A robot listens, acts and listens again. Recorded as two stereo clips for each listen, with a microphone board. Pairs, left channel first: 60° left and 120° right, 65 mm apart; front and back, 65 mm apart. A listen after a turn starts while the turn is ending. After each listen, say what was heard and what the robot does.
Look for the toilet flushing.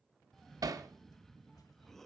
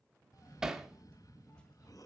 Keep listening.
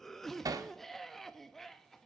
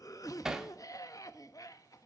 Keep listening.
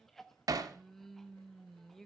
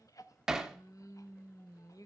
I can't make out a toilet flushing, only a cough and hammering.